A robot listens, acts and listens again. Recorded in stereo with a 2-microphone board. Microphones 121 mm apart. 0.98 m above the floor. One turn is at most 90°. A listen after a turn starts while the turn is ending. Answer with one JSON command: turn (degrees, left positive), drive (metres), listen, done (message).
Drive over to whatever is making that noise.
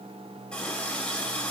{"turn": 30}
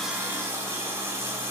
{"turn": -20}
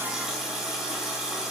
{"drive": 1.0}
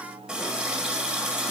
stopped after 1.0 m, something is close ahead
{"done": "Arrived at the running tap, straight ahead."}